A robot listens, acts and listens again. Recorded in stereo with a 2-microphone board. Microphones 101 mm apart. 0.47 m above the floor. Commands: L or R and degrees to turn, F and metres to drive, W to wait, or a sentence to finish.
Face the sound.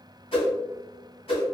L65
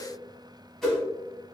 Found it: a whoosh, straight ahead, 1 to 2 m away.